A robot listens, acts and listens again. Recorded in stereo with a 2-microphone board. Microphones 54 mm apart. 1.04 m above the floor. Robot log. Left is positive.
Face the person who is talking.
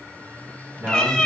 note: The man speaking: about 40° right or 140° right.
cmd yaw -40
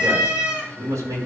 note: So it is at 100° right.
cmd yaw -100
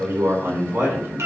note: The man speaking is now 50° right.
cmd yaw -50
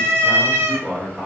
end: Found it: a man speaking, straight ahead.